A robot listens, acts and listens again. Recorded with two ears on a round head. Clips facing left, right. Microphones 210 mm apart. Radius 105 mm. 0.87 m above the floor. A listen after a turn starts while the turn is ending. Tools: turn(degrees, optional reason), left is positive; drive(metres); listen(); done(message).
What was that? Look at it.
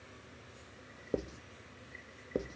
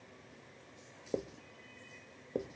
turn(degrees=30)
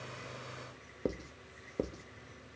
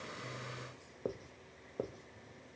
turn(degrees=145, reason="So it is at 145° left.")
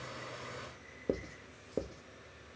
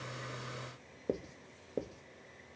done("Found it: writing, straight ahead, 1 to 2 m away.")